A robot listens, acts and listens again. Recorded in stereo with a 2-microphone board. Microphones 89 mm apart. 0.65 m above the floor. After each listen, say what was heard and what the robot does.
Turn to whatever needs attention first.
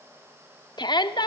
The shout: about 60° left or 120° left. Turn 60° left.
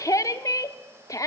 So it is at 45° left. Turn 45° left.
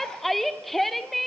Facing the shout, 1 to 2 m away.